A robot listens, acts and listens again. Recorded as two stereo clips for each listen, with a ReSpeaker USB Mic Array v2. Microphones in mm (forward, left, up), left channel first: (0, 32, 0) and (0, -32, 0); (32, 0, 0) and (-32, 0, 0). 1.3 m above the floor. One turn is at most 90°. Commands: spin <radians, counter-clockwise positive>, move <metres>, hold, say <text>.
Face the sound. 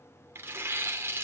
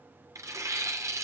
spin -1.57
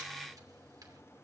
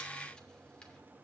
spin -0.96
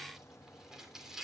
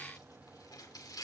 spin -0.17
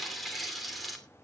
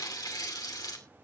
say Facing the tearing paper, 2 to 4 m away.